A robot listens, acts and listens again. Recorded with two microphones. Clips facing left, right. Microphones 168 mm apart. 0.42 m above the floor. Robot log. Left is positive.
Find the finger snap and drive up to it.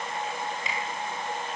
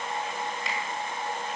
cmd yaw +30
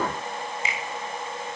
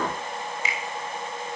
note: So it is at 150° left.
cmd yaw +150
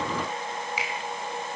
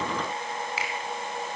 note: The finger snap is now 15° left.
cmd yaw +15
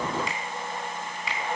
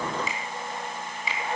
cmd fwd 1.0
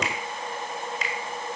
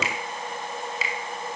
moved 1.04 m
cmd fwd 1.0
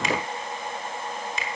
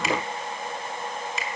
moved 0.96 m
cmd fwd 1.0
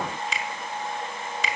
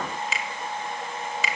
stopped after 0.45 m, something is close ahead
end: Arrived at the finger snap, straight ahead.